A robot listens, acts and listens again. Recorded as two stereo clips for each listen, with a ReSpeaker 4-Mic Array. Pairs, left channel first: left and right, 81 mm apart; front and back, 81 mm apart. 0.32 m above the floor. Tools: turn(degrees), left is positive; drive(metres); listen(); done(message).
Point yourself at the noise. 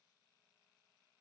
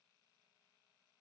listen()
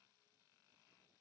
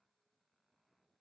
listen()
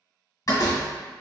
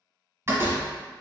turn(degrees=130)
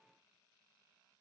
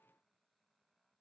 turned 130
done("Facing where the door slam came from. I can't hear it now.")